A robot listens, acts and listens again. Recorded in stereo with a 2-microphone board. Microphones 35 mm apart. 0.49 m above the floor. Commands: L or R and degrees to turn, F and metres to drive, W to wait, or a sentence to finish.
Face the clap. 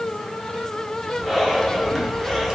W
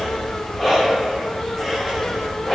W
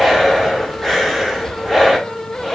I can't make out a clap, only breathing.